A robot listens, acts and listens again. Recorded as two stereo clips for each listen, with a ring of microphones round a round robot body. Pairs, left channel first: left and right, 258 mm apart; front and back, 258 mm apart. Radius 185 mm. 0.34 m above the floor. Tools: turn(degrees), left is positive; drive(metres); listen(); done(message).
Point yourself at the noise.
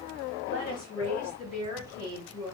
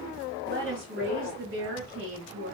turn(degrees=160)
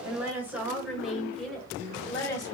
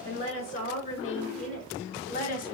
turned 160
turn(degrees=15)
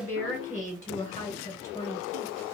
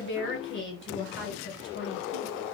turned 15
turn(degrees=15)
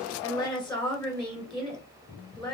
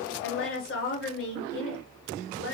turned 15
done("Found it: a woman speaking, straight ahead.")